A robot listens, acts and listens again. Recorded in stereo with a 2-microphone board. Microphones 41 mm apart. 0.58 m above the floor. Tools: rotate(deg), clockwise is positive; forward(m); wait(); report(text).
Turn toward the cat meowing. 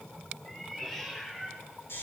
rotate(-30)
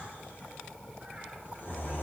wait()
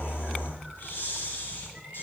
wait()
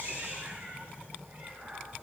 rotate(40)
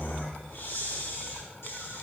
wait()
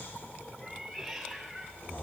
rotate(-10)
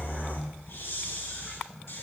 wait()
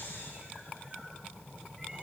wait()
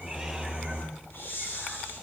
report("Facing where the cat meowing came from. I can't hear it now.")